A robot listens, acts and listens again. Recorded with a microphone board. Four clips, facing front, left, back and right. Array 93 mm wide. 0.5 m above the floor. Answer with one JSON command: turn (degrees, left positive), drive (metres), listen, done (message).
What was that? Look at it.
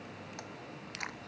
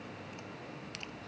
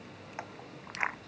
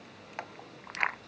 {"turn": -120}
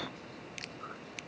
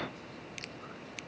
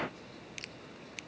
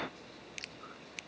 {"listen": true}
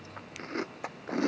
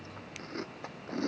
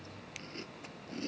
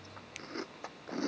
{"done": "Found it: chewing, straight ahead."}